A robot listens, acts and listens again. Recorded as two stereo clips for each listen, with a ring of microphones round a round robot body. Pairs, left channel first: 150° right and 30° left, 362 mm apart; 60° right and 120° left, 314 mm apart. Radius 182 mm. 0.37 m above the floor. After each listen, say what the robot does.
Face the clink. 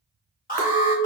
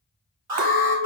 Turn 90° left.
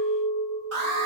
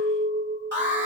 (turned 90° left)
Turn 15° left.
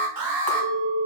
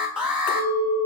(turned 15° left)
Facing the clink.